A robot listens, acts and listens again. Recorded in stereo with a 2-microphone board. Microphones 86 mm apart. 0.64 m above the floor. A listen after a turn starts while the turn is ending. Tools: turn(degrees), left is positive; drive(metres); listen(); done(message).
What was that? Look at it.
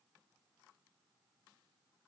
listen()
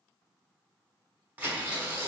turn(degrees=-15)
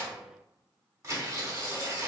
turn(degrees=-145)
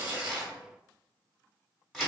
done("Facing the tearing paper.")